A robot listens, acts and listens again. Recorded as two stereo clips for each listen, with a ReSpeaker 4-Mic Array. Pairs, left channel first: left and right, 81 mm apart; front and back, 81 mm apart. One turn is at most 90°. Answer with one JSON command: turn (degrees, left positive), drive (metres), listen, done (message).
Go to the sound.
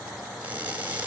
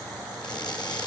{"turn": -25}
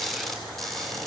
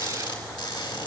{"drive": 1.0}
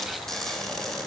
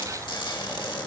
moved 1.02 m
{"drive": 1.0}
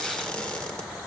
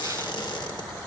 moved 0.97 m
{"turn": 10}
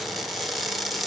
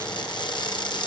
{"drive": 1.0}
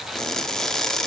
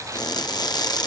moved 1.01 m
{"drive": 1.0}
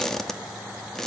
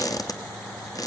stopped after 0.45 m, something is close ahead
{"done": "I am next to the crushing."}